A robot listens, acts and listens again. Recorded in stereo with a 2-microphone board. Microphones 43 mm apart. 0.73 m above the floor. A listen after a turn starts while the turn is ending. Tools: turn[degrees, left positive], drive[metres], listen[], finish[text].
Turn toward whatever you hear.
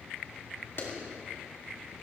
Thought: The clap: about 65° left or 115° left.
Action: turn[65]
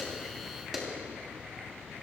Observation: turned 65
Action: finish[Facing the clap.]